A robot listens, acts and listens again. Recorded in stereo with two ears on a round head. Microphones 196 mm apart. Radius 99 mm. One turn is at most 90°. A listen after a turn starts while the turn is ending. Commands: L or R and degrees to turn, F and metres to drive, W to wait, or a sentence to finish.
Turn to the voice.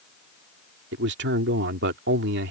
R50
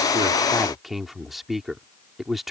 Facing the man speaking.